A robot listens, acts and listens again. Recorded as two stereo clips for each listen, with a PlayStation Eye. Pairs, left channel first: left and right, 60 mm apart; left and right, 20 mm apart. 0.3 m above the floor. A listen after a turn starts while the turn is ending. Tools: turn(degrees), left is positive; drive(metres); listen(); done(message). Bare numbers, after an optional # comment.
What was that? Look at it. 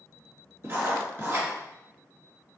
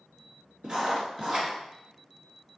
# The writing: about 35° right or 145° right.
turn(-35)
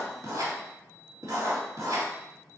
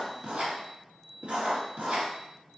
# So it is at 110° right.
turn(-110)
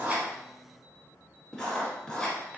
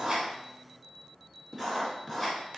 done("Facing the writing, 1 to 2 m away.")